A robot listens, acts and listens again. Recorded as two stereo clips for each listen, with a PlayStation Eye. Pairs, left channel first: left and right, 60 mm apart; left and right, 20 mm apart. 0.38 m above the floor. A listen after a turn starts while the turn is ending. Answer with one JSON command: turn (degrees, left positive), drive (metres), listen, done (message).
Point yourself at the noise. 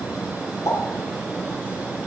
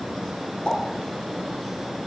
{"turn": 65}
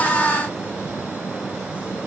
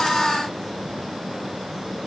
{"listen": true}
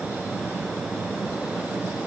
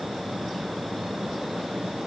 {"done": "I heard a pop, but can't make it out now. It was about straight ahead or 50° left."}